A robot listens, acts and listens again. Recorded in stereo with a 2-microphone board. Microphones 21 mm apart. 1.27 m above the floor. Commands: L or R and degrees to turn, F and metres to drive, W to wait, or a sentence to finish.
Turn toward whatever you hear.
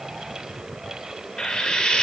L40
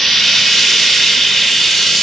Facing the frying, under 1 m away.